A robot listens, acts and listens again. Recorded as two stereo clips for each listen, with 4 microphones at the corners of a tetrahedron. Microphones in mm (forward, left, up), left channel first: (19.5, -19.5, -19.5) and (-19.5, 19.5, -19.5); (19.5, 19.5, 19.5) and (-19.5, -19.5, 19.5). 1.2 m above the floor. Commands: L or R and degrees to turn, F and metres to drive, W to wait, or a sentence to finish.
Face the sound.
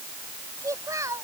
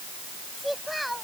L135
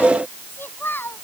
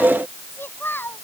Found it: a child speaking, straight ahead.